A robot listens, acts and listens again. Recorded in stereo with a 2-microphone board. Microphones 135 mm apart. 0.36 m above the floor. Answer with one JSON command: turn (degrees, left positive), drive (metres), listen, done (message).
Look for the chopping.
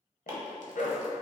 {"turn": -20}
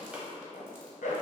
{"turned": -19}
{"listen": true}
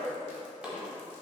{"done": "Facing the chopping, 1 to 2 m away."}